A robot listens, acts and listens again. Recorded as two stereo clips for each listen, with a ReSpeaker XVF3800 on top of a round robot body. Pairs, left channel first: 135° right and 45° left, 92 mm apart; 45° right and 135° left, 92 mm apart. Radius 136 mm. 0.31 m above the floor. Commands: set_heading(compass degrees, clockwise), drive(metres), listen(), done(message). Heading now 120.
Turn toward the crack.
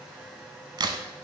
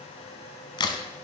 done("Facing the crack, under 1 m away.")